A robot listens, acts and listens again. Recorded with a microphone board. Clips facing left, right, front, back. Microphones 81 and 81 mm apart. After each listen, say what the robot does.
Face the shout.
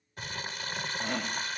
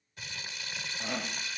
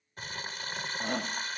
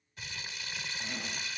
Facing the shout, 1 to 2 m away.